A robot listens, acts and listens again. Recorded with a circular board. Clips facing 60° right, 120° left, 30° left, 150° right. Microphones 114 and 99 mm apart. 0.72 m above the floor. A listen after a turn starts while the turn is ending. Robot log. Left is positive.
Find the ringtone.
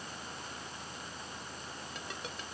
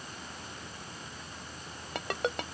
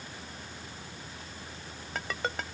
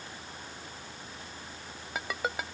note: The ringtone: 125° left.
cmd yaw +125
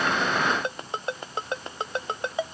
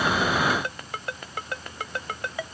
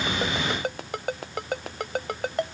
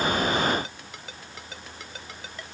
end: Facing the ringtone.